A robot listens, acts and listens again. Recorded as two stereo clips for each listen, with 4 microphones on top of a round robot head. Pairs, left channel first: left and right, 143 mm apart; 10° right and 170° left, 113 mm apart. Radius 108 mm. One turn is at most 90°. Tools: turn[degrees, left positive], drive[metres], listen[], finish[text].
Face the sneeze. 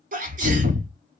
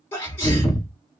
Thought: The sneeze: 80° right.
Action: turn[-80]
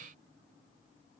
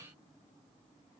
Action: finish[I heard a sneeze from this way, but can't make it out now.]